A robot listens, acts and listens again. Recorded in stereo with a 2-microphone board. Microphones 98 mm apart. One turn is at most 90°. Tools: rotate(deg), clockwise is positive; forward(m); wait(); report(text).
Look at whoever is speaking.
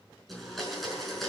wait()
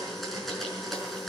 wait()
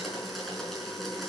report("I can't make out anyone speaking, only a blender.")